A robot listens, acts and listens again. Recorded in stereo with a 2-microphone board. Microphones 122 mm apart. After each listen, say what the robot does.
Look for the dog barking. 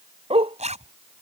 Turn 55° right.
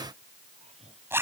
Keep listening.
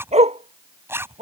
Turn 65° right.
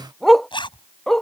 Facing the dog barking.